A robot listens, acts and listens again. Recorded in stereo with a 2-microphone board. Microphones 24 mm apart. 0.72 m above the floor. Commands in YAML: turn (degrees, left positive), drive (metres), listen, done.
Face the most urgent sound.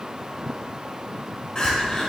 turn: 30
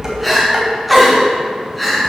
done: "Found it: crying, straight ahead."